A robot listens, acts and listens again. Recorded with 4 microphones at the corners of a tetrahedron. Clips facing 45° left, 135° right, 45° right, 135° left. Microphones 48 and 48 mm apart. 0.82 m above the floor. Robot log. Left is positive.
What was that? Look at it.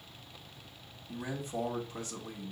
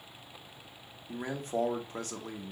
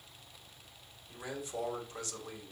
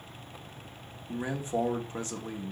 note: The man speaking: 165° right.
cmd yaw -165
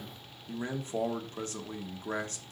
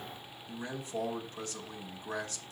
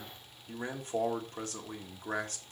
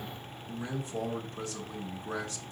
end: Facing the man speaking, 1 to 2 m away.